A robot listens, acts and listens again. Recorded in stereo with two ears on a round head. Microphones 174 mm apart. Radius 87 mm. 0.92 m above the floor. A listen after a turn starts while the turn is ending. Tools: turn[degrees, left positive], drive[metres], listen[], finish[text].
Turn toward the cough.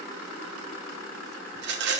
Action: listen[]
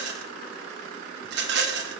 Action: listen[]
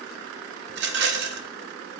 Action: finish[I can't make out a cough to turn to.]